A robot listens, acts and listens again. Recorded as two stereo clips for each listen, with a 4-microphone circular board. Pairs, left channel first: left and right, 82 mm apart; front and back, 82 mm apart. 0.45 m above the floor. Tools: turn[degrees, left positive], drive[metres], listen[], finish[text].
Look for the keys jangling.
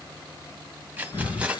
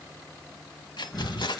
Thought: The keys jangling: 15° right.
Action: turn[-15]
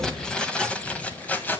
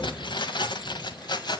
Thought: The keys jangling is now 25° left.
Action: turn[25]
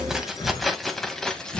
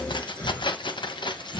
Thought: The keys jangling is now 10° left.
Action: turn[10]
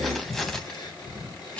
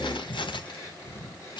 Thought: The keys jangling is now 15° left.
Action: turn[15]
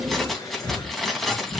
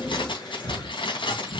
Action: finish[Facing the keys jangling.]